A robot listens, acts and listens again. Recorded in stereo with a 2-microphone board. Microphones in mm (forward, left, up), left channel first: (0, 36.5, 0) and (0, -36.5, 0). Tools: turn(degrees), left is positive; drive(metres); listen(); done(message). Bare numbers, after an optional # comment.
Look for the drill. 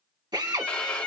# The drill: about 70° right or 110° right.
turn(-70)
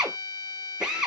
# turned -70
done("Facing the drill.")